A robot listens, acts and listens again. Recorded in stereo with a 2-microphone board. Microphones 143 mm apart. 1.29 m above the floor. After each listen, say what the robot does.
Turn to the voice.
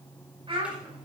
Turn 40° right.
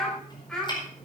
Found it: a child speaking, straight ahead.